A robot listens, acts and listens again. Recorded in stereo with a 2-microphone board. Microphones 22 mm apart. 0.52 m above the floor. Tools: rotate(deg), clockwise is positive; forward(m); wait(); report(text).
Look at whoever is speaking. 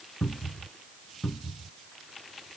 wait()
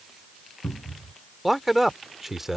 rotate(30)
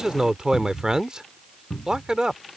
rotate(140)
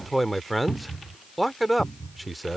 report("Found it: a man speaking, straight ahead.")